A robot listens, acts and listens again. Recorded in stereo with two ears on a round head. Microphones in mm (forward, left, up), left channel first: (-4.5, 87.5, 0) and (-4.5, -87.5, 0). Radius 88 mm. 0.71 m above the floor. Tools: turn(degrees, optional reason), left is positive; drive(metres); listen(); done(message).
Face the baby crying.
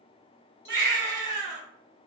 turn(degrees=-55, reason="The baby crying: about 55° right or 125° right.")
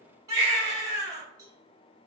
turn(degrees=-25, reason="So it is at 25° right.")
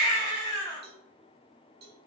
turn(degrees=20, reason="The baby crying is now 20° left.")
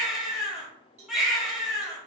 done("Facing the baby crying, 1 to 2 m away.")